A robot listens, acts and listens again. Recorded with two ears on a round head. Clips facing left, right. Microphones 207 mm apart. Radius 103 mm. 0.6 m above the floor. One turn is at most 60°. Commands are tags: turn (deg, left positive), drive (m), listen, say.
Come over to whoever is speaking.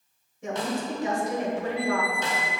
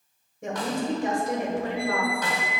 <turn deg="-45"/>
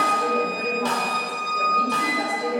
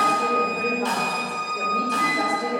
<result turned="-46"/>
<drive m="1.0"/>
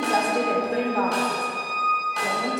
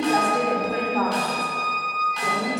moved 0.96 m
<drive m="1.0"/>
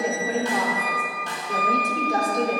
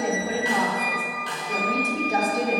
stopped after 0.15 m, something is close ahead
<say>Arrived at the woman speaking, straight ahead.</say>